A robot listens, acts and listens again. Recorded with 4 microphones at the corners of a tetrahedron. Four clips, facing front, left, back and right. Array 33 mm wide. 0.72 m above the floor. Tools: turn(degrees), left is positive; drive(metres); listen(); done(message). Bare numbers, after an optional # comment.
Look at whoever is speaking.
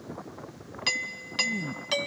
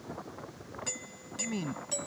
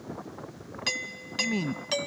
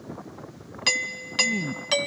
# The man speaking: 170° left.
turn(170)
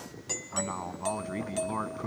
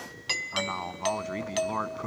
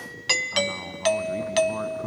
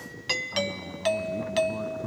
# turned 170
# The man speaking is now 70° left.
turn(70)
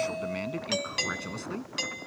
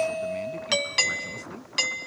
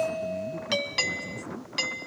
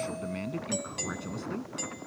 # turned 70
# The man speaking is now 10° right.
turn(-10)
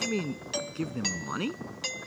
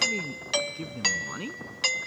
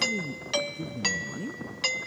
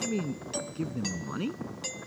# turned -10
done("Facing the man speaking.")